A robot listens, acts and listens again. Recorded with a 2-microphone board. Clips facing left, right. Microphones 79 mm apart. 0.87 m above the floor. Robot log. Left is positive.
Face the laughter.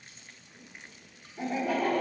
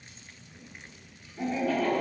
note: The laughter: about 15° left or 165° left.
cmd yaw +15
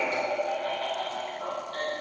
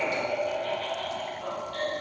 note: The laughter: about 40° left or 140° left.
cmd yaw +40
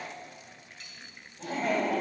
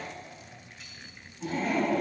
note: So it is at 100° left.
cmd yaw +100
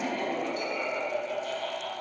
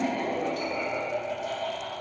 note: The laughter is now 20° right.
cmd yaw -20
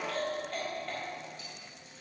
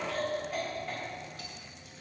end: Found it: laughter, straight ahead.